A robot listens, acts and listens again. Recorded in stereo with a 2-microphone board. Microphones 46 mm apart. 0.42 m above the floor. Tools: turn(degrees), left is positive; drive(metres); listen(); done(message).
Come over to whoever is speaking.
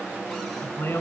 turn(degrees=90)
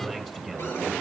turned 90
drive(metres=1.0)
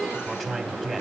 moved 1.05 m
drive(metres=1.0)
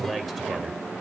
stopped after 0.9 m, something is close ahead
done("Arrived at the man speaking, straight ahead.")